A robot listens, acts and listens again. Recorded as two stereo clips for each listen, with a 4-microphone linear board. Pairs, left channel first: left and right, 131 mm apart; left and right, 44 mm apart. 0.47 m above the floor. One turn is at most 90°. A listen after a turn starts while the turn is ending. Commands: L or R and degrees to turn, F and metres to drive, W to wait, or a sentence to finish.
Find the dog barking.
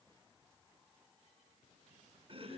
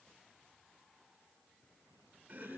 W
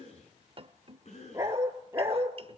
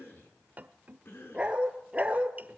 R20
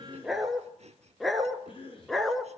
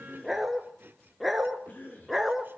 Found it: a dog barking, straight ahead, 1 to 2 m away.